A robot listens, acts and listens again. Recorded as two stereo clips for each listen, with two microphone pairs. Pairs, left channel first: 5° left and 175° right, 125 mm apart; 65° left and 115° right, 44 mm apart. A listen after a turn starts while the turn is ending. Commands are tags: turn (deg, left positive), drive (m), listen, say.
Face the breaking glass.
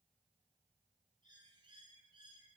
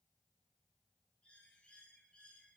<listen/>
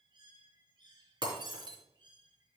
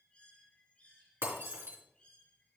<turn deg="-130"/>
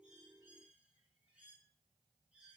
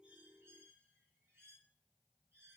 <say>I heard breaking glass from this way, but can't make it out now.</say>